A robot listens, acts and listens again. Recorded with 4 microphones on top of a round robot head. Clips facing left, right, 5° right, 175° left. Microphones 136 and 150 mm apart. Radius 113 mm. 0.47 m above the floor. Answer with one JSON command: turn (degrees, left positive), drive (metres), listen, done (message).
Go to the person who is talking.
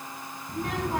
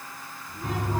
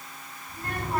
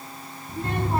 {"turn": 110}
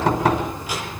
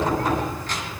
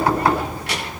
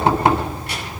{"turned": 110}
{"listen": true}
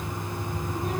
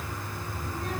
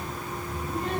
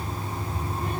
{"listen": true}
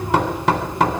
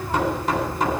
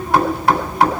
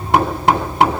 {"done": "I heard a child speaking from this way, but can't make it out now. I did not reach it."}